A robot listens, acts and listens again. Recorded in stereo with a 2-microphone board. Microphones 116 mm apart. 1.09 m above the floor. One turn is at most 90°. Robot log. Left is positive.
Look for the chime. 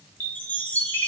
note: The chime: about 15° left or 165° left.
cmd yaw +15
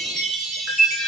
end: Facing the chime.